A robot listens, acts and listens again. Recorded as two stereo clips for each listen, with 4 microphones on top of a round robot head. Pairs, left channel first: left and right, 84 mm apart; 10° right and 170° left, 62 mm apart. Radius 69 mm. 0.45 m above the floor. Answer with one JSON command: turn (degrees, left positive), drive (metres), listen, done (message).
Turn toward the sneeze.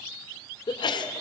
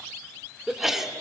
{"turn": 90}
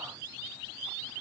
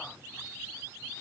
{"done": "Facing where the sneeze came from. I can't hear it now."}